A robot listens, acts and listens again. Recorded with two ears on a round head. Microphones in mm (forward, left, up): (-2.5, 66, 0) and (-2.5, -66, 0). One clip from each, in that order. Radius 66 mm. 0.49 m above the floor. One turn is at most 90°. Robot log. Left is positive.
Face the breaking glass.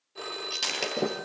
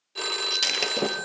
note: The breaking glass: about 20° right or 160° right.
cmd yaw -20
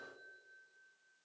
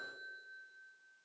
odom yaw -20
cmd idle
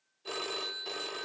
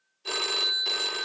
end: I heard breaking glass, but can't make it out now. It was about straight ahead or 140° right.